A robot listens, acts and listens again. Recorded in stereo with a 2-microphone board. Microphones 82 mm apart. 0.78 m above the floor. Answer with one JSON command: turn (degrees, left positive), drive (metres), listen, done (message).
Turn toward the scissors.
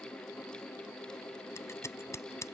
{"turn": 35}
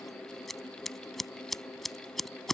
{"done": "Facing the scissors."}